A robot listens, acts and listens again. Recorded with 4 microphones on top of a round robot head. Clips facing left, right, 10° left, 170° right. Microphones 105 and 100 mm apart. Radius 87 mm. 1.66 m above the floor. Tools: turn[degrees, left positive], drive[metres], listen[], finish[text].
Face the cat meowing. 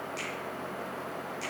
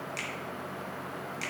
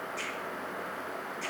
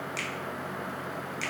Action: listen[]
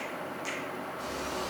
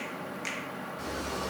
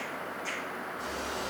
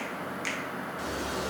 Thought: The cat meowing: 145° right.
Action: turn[-145]
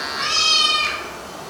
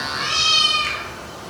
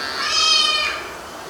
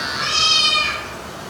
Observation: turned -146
Thought: The cat meowing is now 60° left.
Action: turn[60]
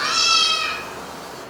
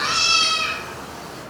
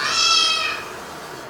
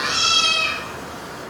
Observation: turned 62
Thought: The cat meowing is now 10° left.
Action: turn[10]
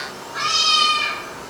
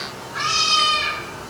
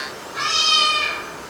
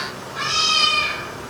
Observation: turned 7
Action: finish[Facing the cat meowing, 2 to 4 m away.]